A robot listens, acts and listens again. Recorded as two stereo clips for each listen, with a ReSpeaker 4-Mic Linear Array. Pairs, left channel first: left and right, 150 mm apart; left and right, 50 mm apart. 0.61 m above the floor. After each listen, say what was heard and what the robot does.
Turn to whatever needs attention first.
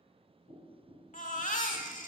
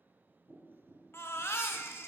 The baby crying: about 55° left or 125° left. Turn 55° left.
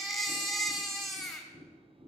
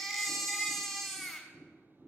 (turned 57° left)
Facing the baby crying, 1 to 2 m away.